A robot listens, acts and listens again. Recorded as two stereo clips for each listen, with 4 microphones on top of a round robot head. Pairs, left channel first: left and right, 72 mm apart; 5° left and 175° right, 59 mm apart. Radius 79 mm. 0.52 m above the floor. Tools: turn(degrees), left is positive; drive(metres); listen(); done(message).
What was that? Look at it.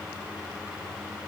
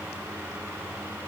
listen()
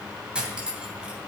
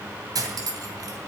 turn(degrees=-165)
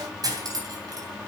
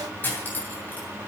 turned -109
turn(degrees=-55)
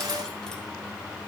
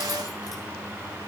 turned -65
turn(degrees=10)
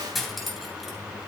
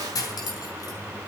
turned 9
done("Found it: cutlery clinking, straight ahead.")